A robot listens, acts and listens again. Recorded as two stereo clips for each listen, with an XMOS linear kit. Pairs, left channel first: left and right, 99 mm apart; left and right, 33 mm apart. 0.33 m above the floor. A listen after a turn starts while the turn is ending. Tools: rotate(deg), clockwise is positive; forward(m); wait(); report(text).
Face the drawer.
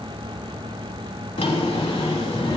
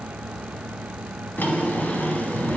rotate(-90)
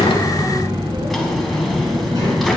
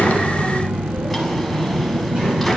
report("Found it: a drawer, straight ahead.")